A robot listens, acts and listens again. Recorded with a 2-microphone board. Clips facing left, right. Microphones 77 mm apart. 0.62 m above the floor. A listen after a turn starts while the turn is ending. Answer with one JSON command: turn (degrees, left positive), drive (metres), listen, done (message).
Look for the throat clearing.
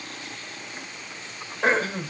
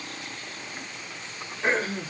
{"turn": 70}
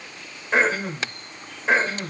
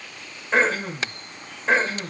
{"done": "Found it: throat clearing, straight ahead."}